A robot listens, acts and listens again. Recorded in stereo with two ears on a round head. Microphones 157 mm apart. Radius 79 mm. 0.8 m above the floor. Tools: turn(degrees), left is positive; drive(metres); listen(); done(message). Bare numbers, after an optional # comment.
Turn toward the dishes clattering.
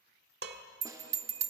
# The dishes clattering: about 70° right or 110° right.
turn(-70)
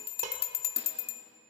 # So it is at 40° right.
turn(-40)
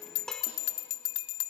done("Facing the dishes clattering.")